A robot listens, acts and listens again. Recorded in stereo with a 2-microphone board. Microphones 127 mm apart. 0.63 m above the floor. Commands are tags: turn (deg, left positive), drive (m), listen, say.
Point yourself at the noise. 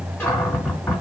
<turn deg="20"/>
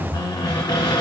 <turn deg="140"/>
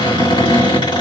<turn deg="50"/>
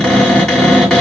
<say>Found it: a cupboard door, straight ahead.</say>